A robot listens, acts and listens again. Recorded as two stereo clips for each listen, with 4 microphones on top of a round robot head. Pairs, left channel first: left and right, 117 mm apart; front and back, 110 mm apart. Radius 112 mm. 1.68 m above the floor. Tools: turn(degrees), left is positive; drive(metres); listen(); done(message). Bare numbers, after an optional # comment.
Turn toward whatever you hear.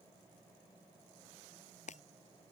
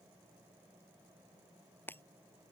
# The breaking glass: 75° left.
turn(75)
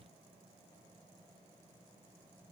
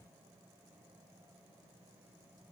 done("Facing where the breaking glass came from. I can't hear it now.")